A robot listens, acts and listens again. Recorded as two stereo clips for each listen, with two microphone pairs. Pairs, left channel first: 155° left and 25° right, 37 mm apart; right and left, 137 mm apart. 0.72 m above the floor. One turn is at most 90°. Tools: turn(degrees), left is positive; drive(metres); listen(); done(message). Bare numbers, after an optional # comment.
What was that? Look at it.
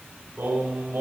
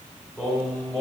# The singing: 10° right.
turn(-10)
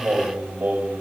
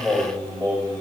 # The singing is now 15° right.
turn(-15)
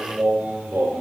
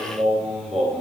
done("Found it: singing, straight ahead.")